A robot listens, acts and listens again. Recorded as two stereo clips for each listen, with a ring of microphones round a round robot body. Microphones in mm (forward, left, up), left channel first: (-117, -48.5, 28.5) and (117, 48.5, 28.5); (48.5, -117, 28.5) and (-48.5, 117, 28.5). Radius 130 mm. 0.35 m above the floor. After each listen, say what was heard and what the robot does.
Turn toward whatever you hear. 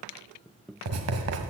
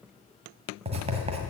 The writing: 45° left. Turn 45° left.
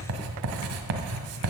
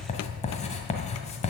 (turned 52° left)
Found it: writing, straight ahead, 1 to 2 m away.